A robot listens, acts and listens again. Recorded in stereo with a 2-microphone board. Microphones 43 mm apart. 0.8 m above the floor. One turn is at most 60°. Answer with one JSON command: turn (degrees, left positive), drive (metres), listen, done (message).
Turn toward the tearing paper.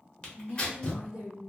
{"turn": 25}
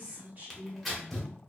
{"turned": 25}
{"done": "Found it: tearing paper, straight ahead."}